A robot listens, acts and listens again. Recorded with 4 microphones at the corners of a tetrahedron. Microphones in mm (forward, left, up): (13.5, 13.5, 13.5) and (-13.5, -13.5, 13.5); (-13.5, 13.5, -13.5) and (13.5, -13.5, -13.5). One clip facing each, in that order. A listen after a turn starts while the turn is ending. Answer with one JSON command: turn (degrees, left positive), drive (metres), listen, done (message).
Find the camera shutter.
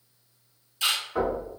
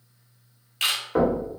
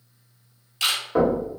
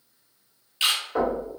{"turn": -115}
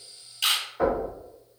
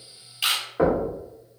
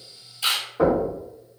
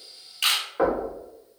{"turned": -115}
{"turn": -50}
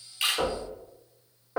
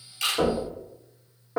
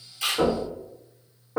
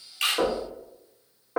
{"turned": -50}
{"listen": true}
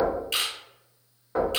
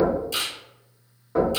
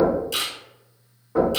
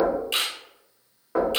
{"done": "Found it: a camera shutter, straight ahead."}